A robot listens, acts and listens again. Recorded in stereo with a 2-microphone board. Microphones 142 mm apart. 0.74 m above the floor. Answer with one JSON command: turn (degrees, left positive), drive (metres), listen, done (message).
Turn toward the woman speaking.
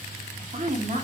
{"turn": -55}
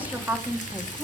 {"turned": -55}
{"turn": -10}
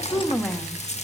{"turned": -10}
{"done": "Found it: a woman speaking, straight ahead."}